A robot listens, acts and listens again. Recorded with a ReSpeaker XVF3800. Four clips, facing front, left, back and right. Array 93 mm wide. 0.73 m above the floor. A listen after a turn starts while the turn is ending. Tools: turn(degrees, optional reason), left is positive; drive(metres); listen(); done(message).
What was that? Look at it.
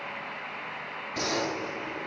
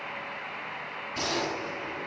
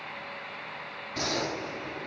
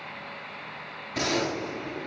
turn(degrees=-85, reason="The gunshot: 85° right.")
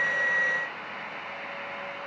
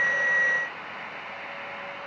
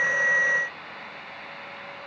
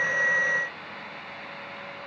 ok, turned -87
done("Facing where the gunshot came from. I can't hear it now.")